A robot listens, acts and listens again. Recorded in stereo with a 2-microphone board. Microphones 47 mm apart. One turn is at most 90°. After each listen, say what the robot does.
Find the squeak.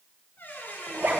Turn 50° left.
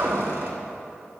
Keep listening.
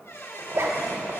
Turn 75° left.
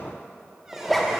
Keep listening.
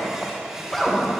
Turn 15° right.
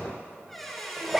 Found it: a squeak, straight ahead, 2 to 4 m away.